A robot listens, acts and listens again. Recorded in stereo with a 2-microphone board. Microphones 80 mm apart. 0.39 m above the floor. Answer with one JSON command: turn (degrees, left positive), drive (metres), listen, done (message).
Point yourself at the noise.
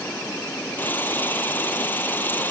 {"turn": 25}
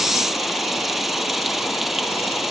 {"done": "Facing the frying."}